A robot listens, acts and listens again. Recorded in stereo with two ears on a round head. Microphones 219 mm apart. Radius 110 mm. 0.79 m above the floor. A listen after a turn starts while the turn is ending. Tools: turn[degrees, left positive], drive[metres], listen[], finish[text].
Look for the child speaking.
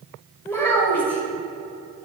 Action: turn[30]
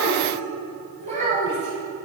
Thought: So it is at 30° right.
Action: turn[-30]
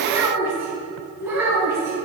Thought: The child speaking is now 10° right.
Action: turn[-10]
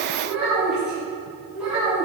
Action: finish[Found it: a child speaking, straight ahead.]